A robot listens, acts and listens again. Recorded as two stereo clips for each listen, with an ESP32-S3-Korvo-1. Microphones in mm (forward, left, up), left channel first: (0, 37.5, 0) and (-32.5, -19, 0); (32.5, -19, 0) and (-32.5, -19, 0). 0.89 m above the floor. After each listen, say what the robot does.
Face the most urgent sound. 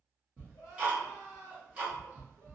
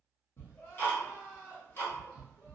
Turn 65° left.
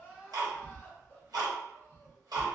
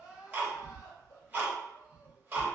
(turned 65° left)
Found it: crying, straight ahead, 1 to 2 m away.